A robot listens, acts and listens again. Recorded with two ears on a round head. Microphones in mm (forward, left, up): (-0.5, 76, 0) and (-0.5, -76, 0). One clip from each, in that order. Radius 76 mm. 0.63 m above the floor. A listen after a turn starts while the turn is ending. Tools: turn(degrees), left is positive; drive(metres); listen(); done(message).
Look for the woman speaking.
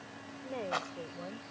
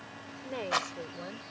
turn(degrees=-70)
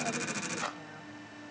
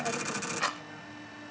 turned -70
listen()
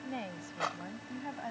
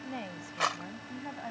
done("Found it: a woman speaking, straight ahead.")